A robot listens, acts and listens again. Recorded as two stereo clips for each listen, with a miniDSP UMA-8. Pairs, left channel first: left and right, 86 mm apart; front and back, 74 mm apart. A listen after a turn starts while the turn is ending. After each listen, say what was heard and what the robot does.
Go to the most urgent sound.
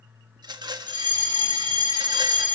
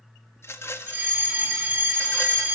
The fire alarm: 120° right. Turn 120° right.
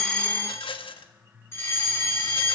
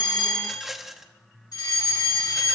The fire alarm is now 30° left. Turn 30° left.
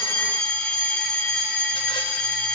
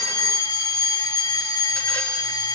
The fire alarm is now 10° left. Turn 10° left.
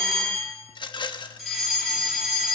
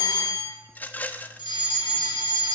Drive 1.0 m forward.
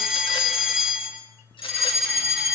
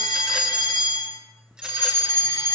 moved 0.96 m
The fire alarm is now 10° right. Turn 10° right.
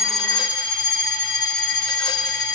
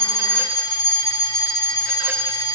Drive 1.0 m forward.
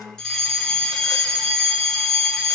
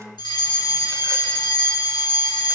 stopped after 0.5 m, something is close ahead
Something is in my way. I am facing the fire alarm but have not reached it.